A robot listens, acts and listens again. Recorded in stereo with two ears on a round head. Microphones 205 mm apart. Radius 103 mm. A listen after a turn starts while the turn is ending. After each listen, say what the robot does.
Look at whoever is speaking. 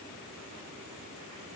Keep listening.
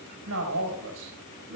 Turn 70° right.
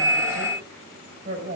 Turn 40° right.
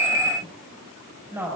Turn 10° right.
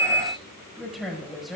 Found it: a woman speaking, straight ahead.